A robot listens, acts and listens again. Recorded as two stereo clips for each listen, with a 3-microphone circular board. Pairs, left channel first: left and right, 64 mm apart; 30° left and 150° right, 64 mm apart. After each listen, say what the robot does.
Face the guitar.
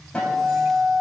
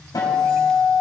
Turn 20° left.
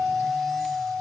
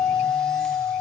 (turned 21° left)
Found it: a guitar, straight ahead, 2 to 4 m away.